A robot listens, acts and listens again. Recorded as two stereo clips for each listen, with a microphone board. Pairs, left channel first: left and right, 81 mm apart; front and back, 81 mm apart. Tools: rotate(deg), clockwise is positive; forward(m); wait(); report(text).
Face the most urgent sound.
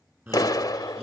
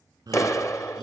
rotate(150)
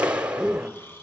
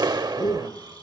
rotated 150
report("Facing the shout.")